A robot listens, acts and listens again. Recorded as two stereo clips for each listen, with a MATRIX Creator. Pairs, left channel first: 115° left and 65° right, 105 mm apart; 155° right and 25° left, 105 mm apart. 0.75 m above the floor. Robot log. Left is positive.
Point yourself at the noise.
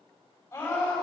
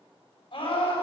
note: The scream: straight behind.
cmd yaw +180
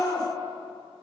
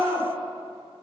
note: The scream is now 75° left.
cmd yaw +75
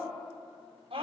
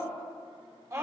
note: The scream is now 35° right.
cmd yaw -35
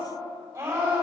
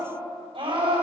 end: Found it: a scream, straight ahead, over 4 m away.